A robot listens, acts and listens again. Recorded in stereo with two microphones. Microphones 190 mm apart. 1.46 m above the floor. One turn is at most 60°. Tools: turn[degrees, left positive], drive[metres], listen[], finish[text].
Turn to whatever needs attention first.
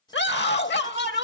Thought: The scream: about 70° left or 110° left.
Action: turn[60]
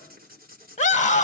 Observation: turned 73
Thought: So it is at 40° left.
Action: turn[40]
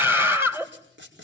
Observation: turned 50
Thought: The scream is now 10° right.
Action: turn[-10]
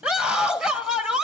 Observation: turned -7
Action: finish[Found it: a scream, straight ahead.]